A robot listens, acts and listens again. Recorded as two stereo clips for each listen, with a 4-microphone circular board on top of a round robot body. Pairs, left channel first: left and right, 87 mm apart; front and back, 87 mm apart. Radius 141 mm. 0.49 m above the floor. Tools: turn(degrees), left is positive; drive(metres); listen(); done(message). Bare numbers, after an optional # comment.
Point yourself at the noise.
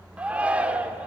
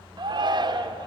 # The shout: 165° right.
turn(-165)
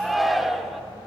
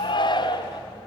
done("Found it: a shout, straight ahead, 1 to 2 m away.")